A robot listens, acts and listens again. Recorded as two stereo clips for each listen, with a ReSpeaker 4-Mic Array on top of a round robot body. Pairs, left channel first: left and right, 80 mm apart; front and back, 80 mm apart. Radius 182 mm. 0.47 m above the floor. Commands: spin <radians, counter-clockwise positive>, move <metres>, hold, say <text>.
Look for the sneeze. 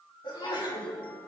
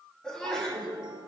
spin 1.40
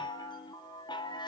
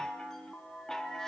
say I heard a sneeze from this way, but can't make it out now.